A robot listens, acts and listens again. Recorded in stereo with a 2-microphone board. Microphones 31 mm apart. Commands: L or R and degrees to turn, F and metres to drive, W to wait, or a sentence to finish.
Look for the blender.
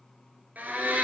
R60
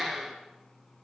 Found it: a blender, straight ahead.